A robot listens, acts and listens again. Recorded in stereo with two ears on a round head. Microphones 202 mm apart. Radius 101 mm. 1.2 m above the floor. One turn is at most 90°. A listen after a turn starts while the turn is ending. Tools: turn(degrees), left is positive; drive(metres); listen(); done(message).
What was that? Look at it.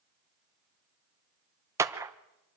turn(degrees=-30)
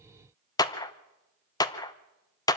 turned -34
turn(degrees=20)
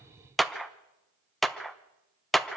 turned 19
done("Facing the clap.")